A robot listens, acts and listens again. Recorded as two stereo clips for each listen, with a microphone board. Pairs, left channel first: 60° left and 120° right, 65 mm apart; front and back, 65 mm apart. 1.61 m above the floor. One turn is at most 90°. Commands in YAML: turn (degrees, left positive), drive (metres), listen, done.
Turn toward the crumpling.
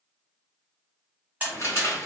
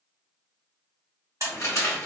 turn: 25
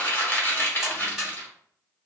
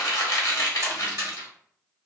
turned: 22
done: "Found it: crumpling, straight ahead."